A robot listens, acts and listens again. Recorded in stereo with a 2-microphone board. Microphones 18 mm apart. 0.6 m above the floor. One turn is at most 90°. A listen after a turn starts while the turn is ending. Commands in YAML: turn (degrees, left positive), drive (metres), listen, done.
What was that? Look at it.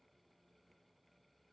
listen: true
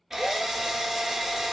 turn: -15
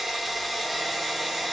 done: "Found it: a drill, straight ahead, 1 to 2 m away."